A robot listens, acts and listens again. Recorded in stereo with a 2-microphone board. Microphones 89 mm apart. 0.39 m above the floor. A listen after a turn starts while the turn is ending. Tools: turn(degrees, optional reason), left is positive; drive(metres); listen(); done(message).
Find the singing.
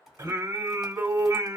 turn(degrees=-35, reason="The singing: about 35° right or 145° right.")
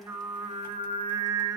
turn(degrees=-105, reason="So it is at 105° right.")
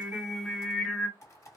done("Facing the singing, 1 to 2 m away.")